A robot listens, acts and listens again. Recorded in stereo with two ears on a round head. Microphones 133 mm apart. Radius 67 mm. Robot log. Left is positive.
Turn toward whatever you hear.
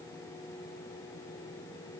cmd idle
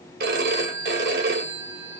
note: The phone ringing: about 70° right or 110° right.
cmd yaw -70
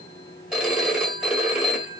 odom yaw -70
end: Facing the phone ringing.